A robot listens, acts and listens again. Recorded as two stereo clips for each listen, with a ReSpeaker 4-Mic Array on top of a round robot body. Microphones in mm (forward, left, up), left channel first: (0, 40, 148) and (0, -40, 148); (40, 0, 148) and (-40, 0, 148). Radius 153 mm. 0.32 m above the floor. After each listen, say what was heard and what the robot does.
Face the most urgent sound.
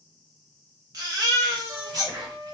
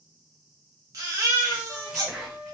The baby crying: 135° right. Turn 135° right.
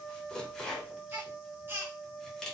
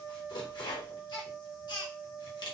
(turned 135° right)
The baby crying is now 30° right. Turn 30° right.
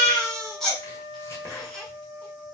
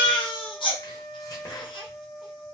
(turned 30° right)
Facing the baby crying, 1 to 2 m away.